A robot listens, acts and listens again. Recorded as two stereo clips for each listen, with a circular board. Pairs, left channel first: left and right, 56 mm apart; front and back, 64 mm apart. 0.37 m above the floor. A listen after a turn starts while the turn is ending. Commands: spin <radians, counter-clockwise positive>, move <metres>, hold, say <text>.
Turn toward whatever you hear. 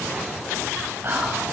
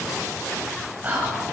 spin -2.09
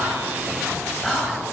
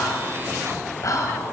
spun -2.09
spin 0.17
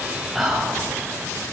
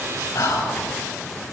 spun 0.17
say Found it: whispering, straight ahead.